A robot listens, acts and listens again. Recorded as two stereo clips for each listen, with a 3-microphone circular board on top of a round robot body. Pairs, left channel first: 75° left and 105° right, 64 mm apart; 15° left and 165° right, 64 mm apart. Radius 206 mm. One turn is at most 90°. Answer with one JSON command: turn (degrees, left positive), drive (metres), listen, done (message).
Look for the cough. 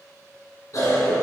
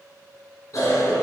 {"turn": 45}
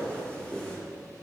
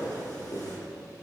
{"done": "Facing the cough."}